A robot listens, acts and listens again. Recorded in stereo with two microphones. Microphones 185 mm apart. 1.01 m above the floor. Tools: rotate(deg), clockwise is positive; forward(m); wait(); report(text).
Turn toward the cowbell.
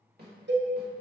rotate(70)
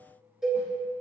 report("Found it: a cowbell, straight ahead, under 1 m away.")